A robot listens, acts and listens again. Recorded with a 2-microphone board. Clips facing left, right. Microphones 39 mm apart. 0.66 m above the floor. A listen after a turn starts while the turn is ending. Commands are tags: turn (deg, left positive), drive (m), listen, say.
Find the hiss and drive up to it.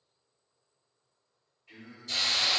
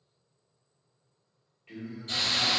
<turn deg="-35"/>
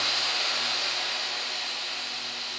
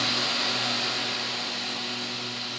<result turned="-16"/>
<turn deg="-25"/>
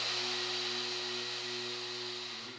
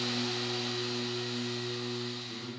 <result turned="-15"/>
<turn deg="-10"/>
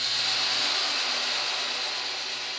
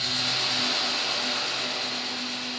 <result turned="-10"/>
<drive m="1.0"/>
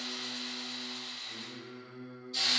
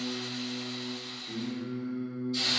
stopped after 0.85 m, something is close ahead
<say>Arrived at the hiss, straight ahead.</say>